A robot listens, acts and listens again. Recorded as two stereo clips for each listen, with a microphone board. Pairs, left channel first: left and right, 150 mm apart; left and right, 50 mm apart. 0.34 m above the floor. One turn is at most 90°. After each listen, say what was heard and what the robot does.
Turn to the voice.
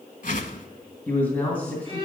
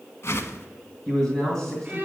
Turn 30° left.
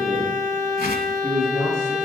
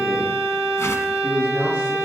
So it is at 20° right. Turn 20° right.
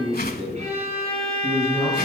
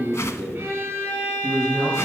Found it: a man speaking, straight ahead.